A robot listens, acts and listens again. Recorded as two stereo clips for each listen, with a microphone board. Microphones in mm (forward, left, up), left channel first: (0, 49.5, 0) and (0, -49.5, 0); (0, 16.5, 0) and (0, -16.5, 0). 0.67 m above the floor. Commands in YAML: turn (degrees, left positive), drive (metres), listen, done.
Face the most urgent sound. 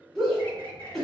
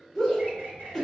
turn: 30
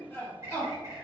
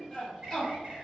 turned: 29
turn: 150
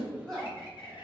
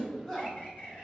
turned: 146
done: "Found it: a shout, straight ahead."